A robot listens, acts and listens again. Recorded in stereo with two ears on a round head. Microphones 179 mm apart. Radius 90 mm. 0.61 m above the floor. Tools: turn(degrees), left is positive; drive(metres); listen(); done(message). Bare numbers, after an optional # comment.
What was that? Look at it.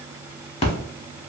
# The splash: about 30° left or 150° left.
turn(30)
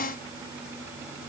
listen()
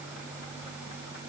done("I heard a splash, but can't make it out now. It was about straight ahead or 120° left.")